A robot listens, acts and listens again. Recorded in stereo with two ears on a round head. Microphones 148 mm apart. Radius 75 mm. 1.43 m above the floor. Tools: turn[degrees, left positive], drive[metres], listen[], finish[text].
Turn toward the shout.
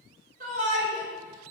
Thought: The shout: about 50° right or 130° right.
Action: turn[-50]
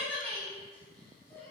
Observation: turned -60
Thought: So it is at 10° left.
Action: turn[10]
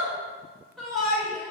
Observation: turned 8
Action: finish[Facing the shout.]